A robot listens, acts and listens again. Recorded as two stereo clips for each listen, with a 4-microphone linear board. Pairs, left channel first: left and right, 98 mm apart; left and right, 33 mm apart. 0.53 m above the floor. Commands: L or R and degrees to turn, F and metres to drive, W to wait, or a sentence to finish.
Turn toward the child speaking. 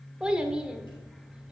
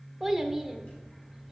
R30
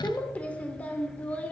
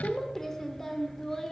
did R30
L15
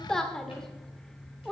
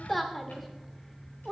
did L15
Facing the child speaking, 1 to 2 m away.